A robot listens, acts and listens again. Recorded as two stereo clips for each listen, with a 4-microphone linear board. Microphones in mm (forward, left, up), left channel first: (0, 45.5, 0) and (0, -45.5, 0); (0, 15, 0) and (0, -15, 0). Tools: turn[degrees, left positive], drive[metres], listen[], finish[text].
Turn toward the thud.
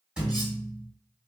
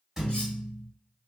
Action: turn[-30]
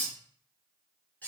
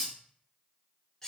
Action: listen[]
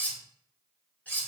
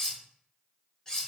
Action: finish[I heard a thud, but can't make it out now. It was about 20° left or 140° right.]